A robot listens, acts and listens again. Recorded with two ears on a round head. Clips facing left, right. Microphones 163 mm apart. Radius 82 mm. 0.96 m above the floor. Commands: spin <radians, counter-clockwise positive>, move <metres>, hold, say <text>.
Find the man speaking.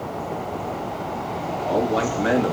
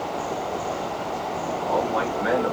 spin 0.70
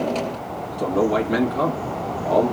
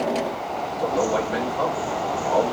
spin 1.66
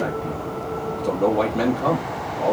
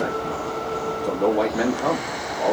say Found it: a man speaking, straight ahead, 1 to 2 m away.